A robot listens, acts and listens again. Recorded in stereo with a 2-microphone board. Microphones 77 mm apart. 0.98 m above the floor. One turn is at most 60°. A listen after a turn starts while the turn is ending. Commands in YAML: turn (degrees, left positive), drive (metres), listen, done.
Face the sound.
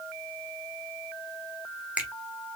turn: -15
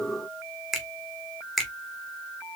done: "Found it: a finger snap, straight ahead."